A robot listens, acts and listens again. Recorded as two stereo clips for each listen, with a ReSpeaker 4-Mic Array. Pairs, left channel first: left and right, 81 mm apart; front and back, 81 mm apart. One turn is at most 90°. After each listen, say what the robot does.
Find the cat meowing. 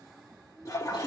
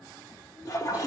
Keep listening.
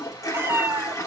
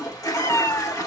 Turn 35° right.
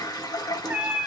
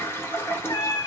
Turn 25° right.
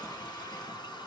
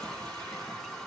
Keep listening.
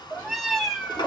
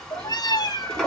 Facing the cat meowing, 1 to 2 m away.